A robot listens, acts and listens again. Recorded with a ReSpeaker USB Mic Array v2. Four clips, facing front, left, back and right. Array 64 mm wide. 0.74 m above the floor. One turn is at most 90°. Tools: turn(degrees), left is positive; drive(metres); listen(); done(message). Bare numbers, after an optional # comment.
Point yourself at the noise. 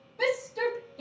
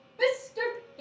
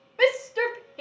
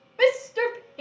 # The shout: 145° right.
turn(-90)
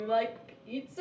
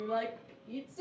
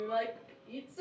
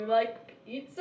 # The shout is now 70° right.
turn(-70)
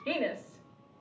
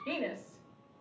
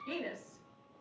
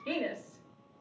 # The shout is now 10° right.
turn(-10)
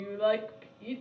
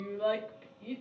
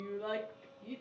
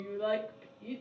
done("Facing the shout.")